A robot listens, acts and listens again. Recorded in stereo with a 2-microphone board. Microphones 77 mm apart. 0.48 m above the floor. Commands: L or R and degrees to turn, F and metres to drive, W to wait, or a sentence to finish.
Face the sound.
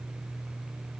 W
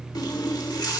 L60
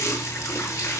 L40
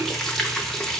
Facing the running tap, under 1 m away.